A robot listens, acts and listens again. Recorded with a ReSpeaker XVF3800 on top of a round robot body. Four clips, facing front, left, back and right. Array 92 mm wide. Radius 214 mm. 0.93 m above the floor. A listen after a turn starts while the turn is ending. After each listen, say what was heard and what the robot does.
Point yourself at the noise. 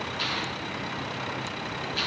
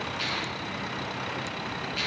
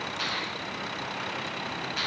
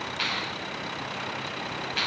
The finger snap: 110° right. Turn 110° right.
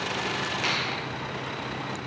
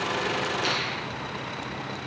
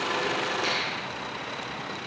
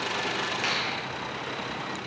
The finger snap is now 45° right. Turn 45° right.
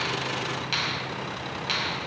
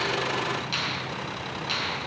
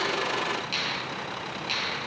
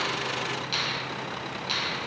Facing the finger snap, over 4 m away.